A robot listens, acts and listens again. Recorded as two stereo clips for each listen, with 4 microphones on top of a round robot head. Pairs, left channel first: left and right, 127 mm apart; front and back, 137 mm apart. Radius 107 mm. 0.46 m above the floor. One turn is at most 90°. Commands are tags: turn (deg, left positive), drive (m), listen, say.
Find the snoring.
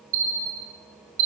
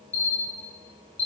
<listen/>
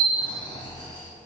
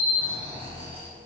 <turn deg="90"/>
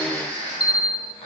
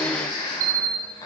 <turn deg="50"/>
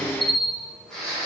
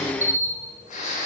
<say>Facing the snoring.</say>